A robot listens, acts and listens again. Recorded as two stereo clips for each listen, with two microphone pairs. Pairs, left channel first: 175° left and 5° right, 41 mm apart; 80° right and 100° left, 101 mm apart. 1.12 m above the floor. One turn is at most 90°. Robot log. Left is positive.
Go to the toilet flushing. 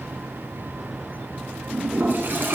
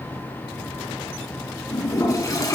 note: The toilet flushing: 30° right.
cmd yaw -30
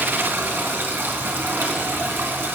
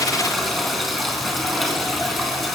note: The toilet flushing is now 10° left.
cmd yaw +10
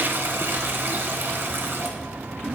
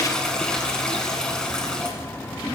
cmd fwd 1.0
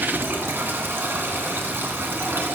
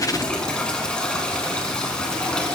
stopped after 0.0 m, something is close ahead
end: Something is in my way. I am facing the toilet flushing but have not reached it.